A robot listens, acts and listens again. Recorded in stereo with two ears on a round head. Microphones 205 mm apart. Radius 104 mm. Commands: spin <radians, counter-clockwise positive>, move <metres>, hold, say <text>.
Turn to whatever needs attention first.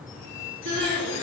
spin -0.96
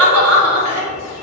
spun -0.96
spin -1.22
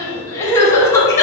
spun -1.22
spin 0.26
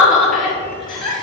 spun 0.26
say Found it: crying, straight ahead, 1 to 2 m away.